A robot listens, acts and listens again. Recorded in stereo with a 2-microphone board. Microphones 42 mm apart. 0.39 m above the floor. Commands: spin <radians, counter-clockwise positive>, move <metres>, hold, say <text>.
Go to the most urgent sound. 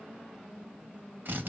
hold
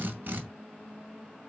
hold
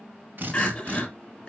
spin 0.44
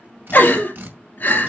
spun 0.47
spin 2.27
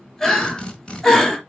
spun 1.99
spin 0.26
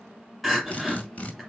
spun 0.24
move 1.0
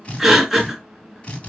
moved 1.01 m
move 1.0
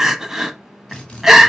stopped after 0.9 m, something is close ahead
spin -0.17
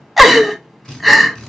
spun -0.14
say I am next to the crying.